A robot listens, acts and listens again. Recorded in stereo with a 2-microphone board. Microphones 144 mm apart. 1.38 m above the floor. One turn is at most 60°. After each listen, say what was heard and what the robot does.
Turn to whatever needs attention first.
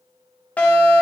Turn 30° left.
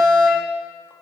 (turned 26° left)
So it is at 15° right. Turn 15° right.
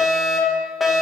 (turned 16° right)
Found it: a fire alarm, straight ahead, 2 to 4 m away.